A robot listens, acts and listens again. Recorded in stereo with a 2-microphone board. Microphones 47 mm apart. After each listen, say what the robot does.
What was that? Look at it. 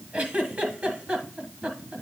Turn 30° right.
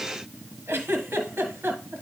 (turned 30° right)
Turn 120° right.
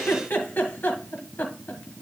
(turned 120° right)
Turn 45° left.
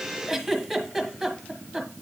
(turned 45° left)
Found it: a giggle, straight ahead.